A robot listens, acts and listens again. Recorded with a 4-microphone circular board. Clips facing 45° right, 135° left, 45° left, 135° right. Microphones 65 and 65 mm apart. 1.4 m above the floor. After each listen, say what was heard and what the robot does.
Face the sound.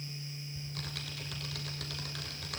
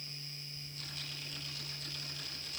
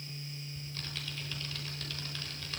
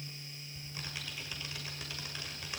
The typing on a keyboard: 60° right. Turn 60° right.
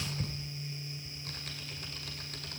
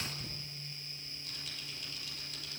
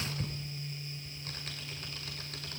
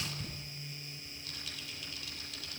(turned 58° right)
Facing the typing on a keyboard.